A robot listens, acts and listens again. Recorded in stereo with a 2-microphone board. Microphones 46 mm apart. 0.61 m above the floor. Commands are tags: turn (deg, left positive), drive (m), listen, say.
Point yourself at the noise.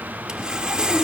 <turn deg="-15"/>
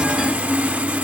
<turn deg="-150"/>
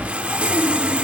<turn deg="-30"/>
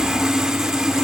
<turn deg="-15"/>
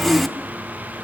<say>Found it: sawing, straight ahead, under 1 m away.</say>